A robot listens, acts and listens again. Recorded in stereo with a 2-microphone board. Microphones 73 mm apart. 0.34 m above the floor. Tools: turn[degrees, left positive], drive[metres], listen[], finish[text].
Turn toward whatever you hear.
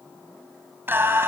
Thought: The singing: about 30° right or 150° right.
Action: turn[-30]
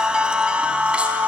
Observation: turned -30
Thought: So it is at 15° right.
Action: turn[-15]
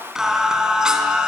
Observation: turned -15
Thought: The singing is now 10° right.
Action: turn[-10]
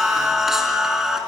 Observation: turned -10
Action: finish[Found it: singing, straight ahead, over 4 m away.]